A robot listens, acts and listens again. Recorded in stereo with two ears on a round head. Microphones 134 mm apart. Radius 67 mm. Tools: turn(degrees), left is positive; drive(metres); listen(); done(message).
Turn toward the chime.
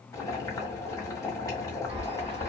turn(degrees=-45)
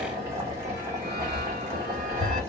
turn(degrees=-75)
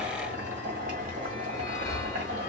turn(degrees=20)
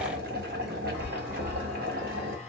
done("Facing the chime.")